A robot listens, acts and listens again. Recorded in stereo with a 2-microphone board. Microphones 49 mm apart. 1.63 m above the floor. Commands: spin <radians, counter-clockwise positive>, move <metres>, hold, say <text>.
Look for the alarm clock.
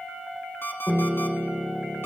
spin 0.96
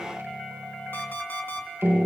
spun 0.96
spin 0.96
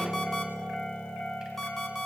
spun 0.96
spin 0.17
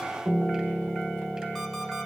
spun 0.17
hold
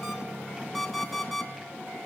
say Facing the alarm clock.